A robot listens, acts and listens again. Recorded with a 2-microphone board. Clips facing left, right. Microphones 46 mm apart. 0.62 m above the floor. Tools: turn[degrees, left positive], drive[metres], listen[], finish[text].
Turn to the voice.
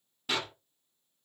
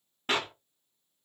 Action: listen[]
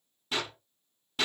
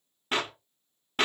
Action: listen[]
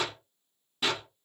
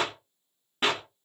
Action: finish[I can't make out anyone speaking, only a clap.]